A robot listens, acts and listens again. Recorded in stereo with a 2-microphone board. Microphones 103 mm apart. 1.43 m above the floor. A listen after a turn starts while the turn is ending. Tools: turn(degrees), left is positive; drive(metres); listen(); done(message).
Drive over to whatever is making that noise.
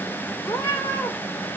turn(degrees=25)
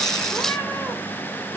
listen()
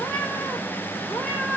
drive(metres=1.0)
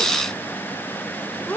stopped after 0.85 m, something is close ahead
turn(degrees=15)
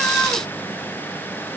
listen()
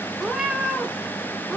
done("I am next to the cat meowing.")